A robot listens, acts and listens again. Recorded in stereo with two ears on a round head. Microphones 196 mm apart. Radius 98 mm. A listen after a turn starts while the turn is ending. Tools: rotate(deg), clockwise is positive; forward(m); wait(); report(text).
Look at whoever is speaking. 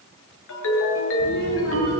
rotate(-45)
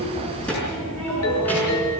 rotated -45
report("Facing the child speaking.")